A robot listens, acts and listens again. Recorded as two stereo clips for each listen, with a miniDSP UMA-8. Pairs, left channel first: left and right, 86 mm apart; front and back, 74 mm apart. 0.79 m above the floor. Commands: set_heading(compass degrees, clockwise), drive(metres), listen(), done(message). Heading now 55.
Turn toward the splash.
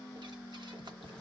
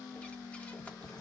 listen()
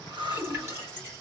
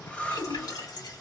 set_heading(80)
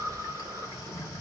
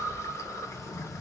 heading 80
done("I heard a splash from this way, but can't make it out now.")